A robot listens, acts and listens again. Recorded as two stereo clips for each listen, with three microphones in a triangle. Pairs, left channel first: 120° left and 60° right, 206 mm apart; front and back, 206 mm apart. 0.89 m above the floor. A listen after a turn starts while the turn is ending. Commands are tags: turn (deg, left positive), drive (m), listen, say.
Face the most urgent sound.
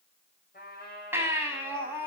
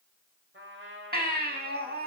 <turn deg="-140"/>
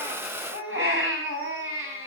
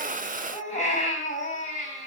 <turn deg="-55"/>
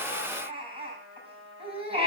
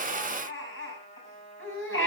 <say>Found it: a baby crying, straight ahead, over 4 m away.</say>